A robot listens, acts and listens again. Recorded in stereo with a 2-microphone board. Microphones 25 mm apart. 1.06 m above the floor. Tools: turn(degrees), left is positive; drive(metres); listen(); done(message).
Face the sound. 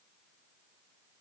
listen()
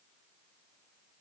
listen()
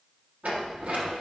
turn(degrees=-70)
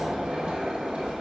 turn(degrees=-40)
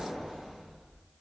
done("Facing the sliding door.")